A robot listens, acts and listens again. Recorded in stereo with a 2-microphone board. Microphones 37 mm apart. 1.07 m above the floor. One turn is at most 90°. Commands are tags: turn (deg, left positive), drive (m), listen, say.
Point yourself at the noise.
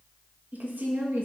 <turn deg="-60"/>
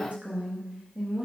<turn deg="-35"/>
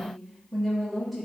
<say>Facing the woman speaking, 2 to 4 m away.</say>